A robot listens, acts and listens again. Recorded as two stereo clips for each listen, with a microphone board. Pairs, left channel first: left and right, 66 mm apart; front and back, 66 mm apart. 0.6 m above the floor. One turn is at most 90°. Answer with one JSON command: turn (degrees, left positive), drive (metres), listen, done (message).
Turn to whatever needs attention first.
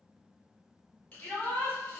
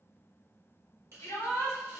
{"turn": 25}
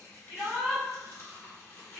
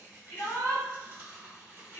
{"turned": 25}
{"turn": 10}
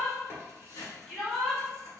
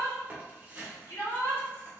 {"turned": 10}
{"done": "Facing the shout, 1 to 2 m away."}